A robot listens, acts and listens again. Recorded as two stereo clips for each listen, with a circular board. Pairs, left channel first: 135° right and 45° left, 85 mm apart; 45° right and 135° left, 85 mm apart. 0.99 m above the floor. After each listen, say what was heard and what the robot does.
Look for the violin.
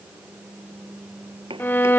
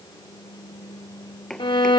The violin: 70° right. Turn 70° right.
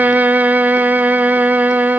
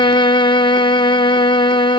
The violin is now 25° right. Turn 25° right.
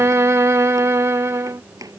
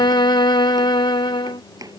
The violin is now 15° right. Turn 15° right.
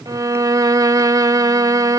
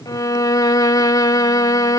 Found it: a violin, straight ahead.